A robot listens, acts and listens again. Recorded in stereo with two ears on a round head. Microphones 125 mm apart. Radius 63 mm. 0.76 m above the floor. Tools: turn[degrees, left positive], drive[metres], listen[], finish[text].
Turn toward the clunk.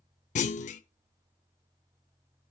Thought: The clunk: about 55° left or 125° left.
Action: turn[55]
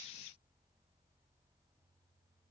Action: listen[]
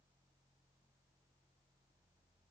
Action: finish[I heard a clunk, but can't make it out now. It was about straight ahead or 70° left.]